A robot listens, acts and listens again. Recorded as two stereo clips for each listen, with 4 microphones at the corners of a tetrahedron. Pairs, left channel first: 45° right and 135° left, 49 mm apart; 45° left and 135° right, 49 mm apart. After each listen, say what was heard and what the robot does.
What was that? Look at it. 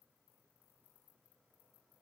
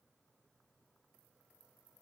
Keep listening.
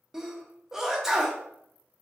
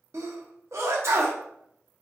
The sneeze: 145° right. Turn 145° right.
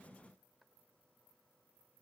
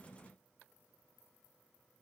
I heard a sneeze from this way, but can't make it out now.